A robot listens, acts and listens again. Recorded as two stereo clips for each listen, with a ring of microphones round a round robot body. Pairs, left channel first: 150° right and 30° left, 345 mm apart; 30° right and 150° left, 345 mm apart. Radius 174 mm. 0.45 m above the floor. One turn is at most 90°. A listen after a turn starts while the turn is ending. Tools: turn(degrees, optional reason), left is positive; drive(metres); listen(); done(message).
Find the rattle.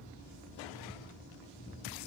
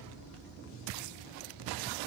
listen()
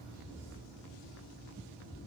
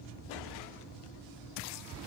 listen()
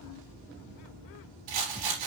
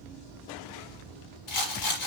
turn(degrees=10, reason="The rattle: 10° left.")
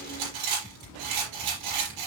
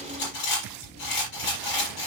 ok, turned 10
done("Found it: a rattle, straight ahead, over 4 m away.")